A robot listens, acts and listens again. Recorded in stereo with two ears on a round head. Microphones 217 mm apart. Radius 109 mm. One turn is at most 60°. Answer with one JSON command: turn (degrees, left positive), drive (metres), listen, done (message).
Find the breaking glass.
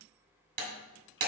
{"turn": -40}
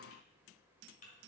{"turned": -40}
{"listen": true}
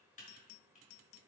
{"done": "I heard breaking glass, but can't make it out now. It was about straight ahead or 100° right."}